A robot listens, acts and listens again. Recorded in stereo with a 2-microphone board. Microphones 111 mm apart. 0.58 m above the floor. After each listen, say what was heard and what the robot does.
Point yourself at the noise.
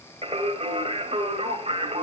The singing: about 60° right or 120° right. Turn 60° right.
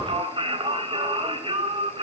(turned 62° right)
So it is at 55° right. Turn 55° right.
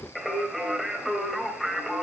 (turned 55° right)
Found it: singing, straight ahead, 2 to 4 m away.